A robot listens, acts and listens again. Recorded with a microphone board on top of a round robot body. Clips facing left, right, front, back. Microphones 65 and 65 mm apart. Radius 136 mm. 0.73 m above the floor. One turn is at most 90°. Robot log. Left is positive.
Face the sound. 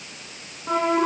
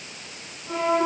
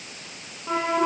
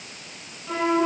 note: The flute: 60° left.
cmd yaw +60
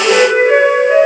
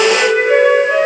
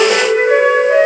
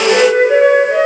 note: The flute is now 15° left.
cmd yaw +15
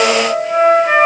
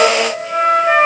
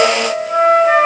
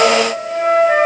end: Found it: a flute, straight ahead.